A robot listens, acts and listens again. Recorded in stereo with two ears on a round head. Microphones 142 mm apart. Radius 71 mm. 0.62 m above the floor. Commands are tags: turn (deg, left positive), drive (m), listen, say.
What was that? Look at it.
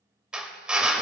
<turn deg="-30"/>
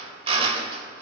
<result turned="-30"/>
<turn deg="-140"/>
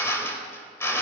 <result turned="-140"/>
<turn deg="15"/>
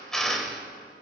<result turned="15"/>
<say>Facing the drill, 1 to 2 m away.</say>